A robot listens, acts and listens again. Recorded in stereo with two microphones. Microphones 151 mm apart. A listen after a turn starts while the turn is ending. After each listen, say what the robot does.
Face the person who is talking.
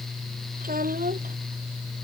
Turn 90° right.
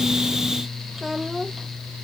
Facing the child speaking.